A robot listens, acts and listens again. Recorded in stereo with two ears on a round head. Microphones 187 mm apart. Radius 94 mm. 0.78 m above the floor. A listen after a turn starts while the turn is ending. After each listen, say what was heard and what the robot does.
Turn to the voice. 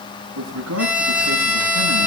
The man speaking: about 70° right or 110° right. Turn 70° right.
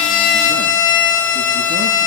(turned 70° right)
Keep listening.
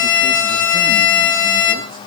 Keep listening.
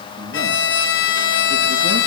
I heard a man speaking, but can't make it out now. It was about straight ahead or 40° right.